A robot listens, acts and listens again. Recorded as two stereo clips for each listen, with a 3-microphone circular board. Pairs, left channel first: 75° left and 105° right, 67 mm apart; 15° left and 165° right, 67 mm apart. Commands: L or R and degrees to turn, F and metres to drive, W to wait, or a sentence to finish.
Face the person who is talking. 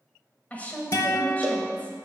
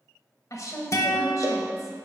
L15
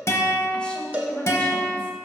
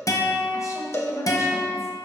Facing the woman speaking.